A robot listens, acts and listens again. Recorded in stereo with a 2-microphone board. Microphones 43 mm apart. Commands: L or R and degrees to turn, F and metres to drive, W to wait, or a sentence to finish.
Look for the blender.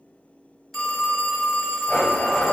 L30
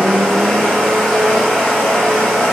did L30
Facing the blender, under 1 m away.